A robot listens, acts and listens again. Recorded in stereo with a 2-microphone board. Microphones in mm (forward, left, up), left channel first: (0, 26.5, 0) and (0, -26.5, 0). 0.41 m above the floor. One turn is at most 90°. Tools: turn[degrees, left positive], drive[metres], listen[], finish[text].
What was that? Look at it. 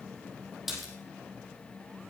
Action: turn[-30]
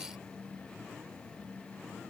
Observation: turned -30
Action: listen[]
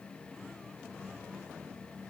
Action: finish[I heard a splash, but can't make it out now. It was about 25° left or 145° right.]